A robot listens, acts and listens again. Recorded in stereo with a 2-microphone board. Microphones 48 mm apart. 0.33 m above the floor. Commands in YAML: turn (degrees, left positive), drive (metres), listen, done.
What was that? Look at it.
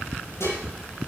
turn: 90
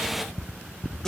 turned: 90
turn: 10
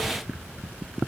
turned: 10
listen: true
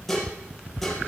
done: "Found it: dishes clattering, straight ahead."